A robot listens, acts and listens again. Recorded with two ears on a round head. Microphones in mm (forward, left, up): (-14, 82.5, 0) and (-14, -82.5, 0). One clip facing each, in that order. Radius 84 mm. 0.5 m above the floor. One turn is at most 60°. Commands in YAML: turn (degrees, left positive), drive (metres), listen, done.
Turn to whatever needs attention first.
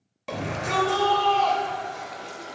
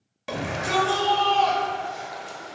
turn: -30
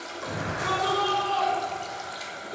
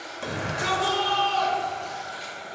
turn: -60
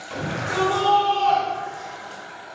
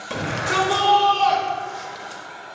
turn: -60
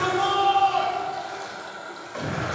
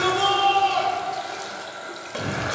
turn: -40
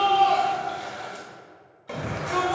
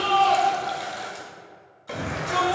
done: "Facing the shout, 1 to 2 m away."